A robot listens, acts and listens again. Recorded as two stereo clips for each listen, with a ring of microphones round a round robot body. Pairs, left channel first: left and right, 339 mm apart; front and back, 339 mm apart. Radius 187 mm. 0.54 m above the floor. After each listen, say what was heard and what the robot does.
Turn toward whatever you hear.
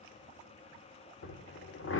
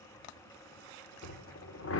The drill: 40° left. Turn 40° left.
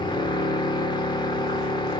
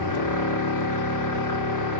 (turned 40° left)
The drill is now 15° left. Turn 15° left.
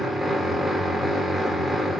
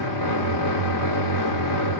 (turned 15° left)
Facing the drill.